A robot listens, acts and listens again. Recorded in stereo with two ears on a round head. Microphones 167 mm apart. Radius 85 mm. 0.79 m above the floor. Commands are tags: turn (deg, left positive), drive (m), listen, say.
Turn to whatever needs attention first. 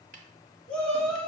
<turn deg="30"/>
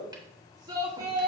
<turn deg="-20"/>
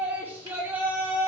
<turn deg="-10"/>
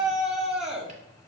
<say>Found it: a shout, straight ahead, 1 to 2 m away.</say>